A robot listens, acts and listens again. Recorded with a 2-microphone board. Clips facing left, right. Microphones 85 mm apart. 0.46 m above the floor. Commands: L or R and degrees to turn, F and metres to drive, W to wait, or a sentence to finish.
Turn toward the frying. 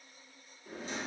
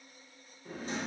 W
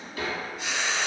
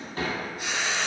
R60
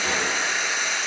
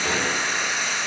R60
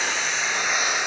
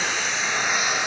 Found it: frying, straight ahead.